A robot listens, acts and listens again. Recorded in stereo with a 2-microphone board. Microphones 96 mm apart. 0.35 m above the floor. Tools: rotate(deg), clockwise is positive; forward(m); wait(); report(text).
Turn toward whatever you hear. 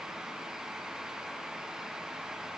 wait()
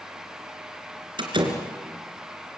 rotate(55)
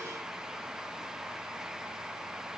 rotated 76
wait()
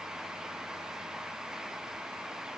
report("I heard a door slam, but can't make it out now. It was about 20° left or 45° right.")